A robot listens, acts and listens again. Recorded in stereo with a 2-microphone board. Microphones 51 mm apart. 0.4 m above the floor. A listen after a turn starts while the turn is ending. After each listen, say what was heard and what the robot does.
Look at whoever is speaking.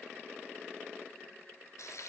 Keep listening.
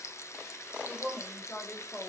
The woman speaking: about 40° left or 140° left. Turn 40° left.
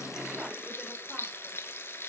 Keep listening.
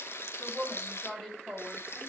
So it is at 10° left. Turn 10° left.
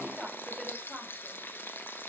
Found it: a woman speaking, straight ahead.